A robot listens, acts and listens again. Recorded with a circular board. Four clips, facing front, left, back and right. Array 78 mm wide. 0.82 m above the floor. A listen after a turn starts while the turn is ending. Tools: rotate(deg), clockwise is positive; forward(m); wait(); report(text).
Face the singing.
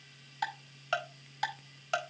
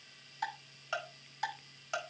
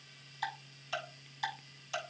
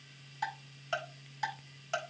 wait()
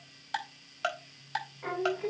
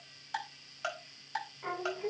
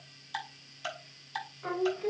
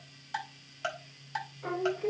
rotate(-15)
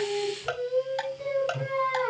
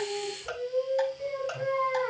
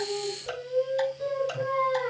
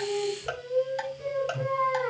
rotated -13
report("Found it: singing, straight ahead, over 4 m away.")